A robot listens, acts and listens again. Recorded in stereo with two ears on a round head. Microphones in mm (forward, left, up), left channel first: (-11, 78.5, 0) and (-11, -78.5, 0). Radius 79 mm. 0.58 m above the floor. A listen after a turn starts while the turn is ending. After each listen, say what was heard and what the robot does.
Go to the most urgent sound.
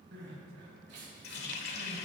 The crying: about 70° right or 110° right. Turn 70° right.
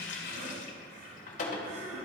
So it is at 40° right. Turn 40° right.
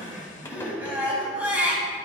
The crying is now 10° right. Turn 10° right.
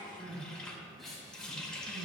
Drive 1.0 m forward.
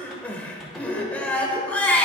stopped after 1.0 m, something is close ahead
The crying is now 10° left. Turn 10° left.
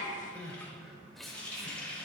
Arrived at the crying, straight ahead.